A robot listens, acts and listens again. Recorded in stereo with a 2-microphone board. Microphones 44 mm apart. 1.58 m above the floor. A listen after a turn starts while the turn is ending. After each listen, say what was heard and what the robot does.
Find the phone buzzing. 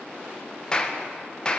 Keep listening.
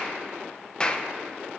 Keep listening.
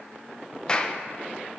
I can't make out a phone buzzing, only a clap.